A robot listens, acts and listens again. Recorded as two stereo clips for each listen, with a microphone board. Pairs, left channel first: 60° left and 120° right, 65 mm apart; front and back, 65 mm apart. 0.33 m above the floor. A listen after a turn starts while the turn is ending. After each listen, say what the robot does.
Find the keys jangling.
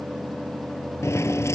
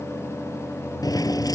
Turn 15° left.
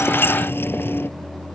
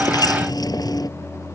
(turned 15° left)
Facing the keys jangling.